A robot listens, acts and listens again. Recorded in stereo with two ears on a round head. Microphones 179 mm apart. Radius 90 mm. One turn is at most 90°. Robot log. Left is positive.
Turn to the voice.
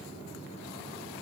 cmd idle
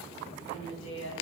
note: The woman speaking: about 70° left or 110° left.
cmd yaw +70
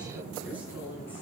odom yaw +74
note: So it is at 10° right.
cmd yaw -10
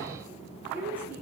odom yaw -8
note: The woman speaking is now 10° right.
cmd yaw -10
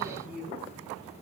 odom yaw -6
end: Facing the woman speaking.